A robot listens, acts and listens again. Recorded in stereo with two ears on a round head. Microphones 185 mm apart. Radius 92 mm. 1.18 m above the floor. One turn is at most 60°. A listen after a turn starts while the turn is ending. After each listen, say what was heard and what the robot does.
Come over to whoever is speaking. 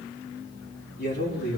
The man speaking: about 50° left or 130° left. Turn 50° left.
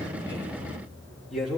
Drive 1.0 m forward.
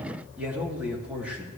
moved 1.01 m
The man speaking is now 10° right. Turn 10° right.
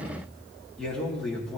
Drive 1.0 m forward.
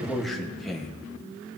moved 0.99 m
Drive 1.0 m forward.
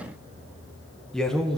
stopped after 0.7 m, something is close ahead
Arrived at the man speaking, straight ahead.